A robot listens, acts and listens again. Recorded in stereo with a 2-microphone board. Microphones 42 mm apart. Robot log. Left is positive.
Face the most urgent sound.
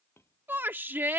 note: The shout: about 55° right or 125° right.
cmd yaw -55
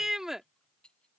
note: So it is at 10° right.
cmd yaw -10
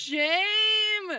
end: Facing the shout.